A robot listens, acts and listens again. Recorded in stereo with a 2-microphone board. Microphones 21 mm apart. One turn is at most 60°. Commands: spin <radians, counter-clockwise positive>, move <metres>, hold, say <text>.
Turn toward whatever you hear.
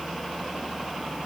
hold
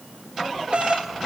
spin -1.05
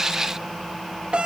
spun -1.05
spin -0.96
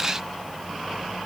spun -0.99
hold
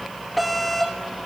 say Facing the doorbell, over 4 m away.